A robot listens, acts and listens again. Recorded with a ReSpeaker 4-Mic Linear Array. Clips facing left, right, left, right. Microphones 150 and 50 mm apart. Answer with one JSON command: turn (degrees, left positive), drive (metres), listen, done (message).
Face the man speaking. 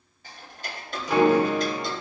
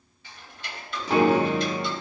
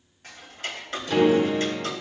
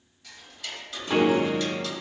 {"listen": true}
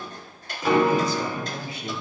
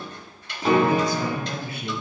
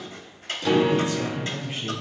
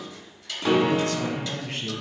{"turn": -65}
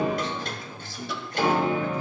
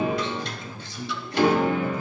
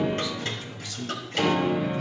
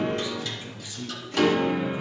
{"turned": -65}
{"turn": -20}
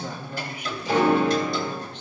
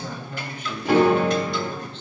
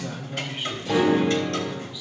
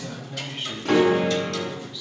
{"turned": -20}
{"turn": 15}
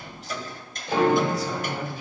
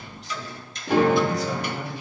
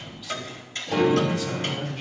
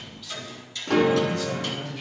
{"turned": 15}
{"done": "Facing the man speaking, 1 to 2 m away."}